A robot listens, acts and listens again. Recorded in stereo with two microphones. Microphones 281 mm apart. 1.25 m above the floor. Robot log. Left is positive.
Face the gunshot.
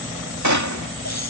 cmd yaw -90
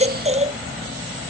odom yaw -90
end: Facing where the gunshot came from. I can't hear it now.